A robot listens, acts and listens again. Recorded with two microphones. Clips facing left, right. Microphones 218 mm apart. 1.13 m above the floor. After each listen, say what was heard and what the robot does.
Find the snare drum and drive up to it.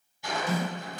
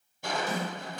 Turn 30° right.
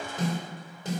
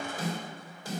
So it is at 20° left. Turn 20° left.
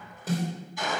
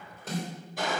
Drive 1.0 m forward.
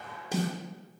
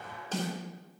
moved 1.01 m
The snare drum is now 10° left. Turn 10° left.
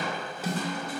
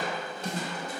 Drive 1.0 m forward.
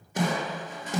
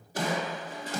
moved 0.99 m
The snare drum is now 20° left. Turn 20° left.
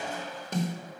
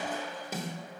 Drive 1.0 m forward.
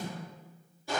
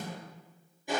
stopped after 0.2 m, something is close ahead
Keep listening.
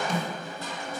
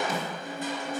Arrived at the snare drum, straight ahead.